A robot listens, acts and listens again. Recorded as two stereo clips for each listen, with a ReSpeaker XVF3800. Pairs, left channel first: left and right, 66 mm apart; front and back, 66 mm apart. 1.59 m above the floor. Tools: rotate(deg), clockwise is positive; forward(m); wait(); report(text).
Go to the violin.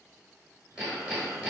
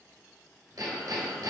wait()
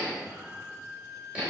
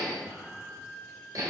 rotate(80)
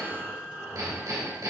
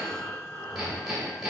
wait()
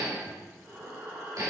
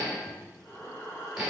wait()
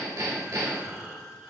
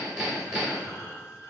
report("Facing where the violin came from. I can't hear it now. I did not reach it.")